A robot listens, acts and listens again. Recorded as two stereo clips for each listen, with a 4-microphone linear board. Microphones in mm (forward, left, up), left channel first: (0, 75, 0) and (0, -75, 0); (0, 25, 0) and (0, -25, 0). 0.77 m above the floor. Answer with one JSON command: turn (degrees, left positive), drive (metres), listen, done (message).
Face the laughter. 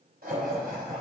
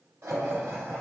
{"turn": -90}
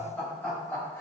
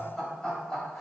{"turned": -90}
{"turn": 15}
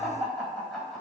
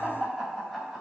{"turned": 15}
{"done": "Facing the laughter."}